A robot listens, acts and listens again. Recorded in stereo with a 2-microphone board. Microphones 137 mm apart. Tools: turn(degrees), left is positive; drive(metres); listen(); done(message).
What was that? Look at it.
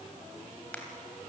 turn(degrees=30)
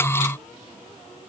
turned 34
listen()
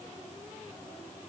done("I heard a crack, but can't make it out now. It was about 20° right or 135° left.")